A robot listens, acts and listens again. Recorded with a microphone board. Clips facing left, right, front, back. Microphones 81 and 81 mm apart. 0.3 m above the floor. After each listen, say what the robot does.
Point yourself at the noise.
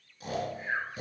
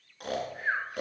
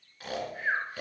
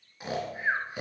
Turn 110° right.
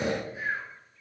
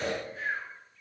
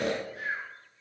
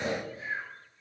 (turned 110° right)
Turn 10° left.
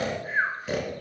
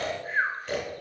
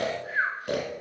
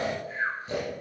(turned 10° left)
Facing the snoring, 2 to 4 m away.